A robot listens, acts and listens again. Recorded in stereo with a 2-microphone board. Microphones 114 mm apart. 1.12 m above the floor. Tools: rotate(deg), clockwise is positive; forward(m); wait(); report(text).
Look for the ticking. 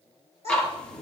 rotate(-30)
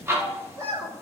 rotate(20)
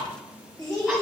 wait()
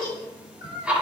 rotate(10)
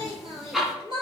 report("Facing the ticking, under 1 m away.")